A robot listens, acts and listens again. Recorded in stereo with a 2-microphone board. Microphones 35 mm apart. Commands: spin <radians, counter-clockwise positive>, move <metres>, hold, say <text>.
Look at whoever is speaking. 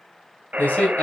spin 0.96
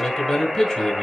spin 0.26
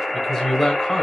spin 0.17
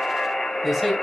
say Found it: a man speaking, straight ahead.